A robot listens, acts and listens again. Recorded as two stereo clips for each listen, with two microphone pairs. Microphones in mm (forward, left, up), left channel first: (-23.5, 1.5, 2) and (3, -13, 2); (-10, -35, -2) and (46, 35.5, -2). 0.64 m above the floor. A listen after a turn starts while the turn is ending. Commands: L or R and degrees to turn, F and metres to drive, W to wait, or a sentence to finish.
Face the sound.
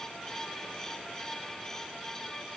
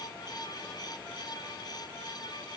W
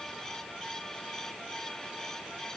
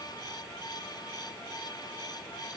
W
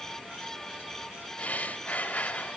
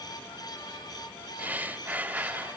L120
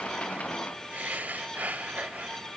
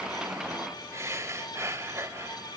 Facing the breathing, under 1 m away.